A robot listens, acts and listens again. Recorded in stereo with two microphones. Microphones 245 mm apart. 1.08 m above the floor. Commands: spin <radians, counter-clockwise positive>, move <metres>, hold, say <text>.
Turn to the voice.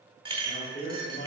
spin 0.70
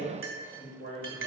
spin 2.01
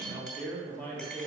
spin 0.26
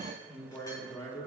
spin 0.35
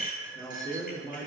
spin 0.26
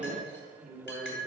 say Facing the man speaking.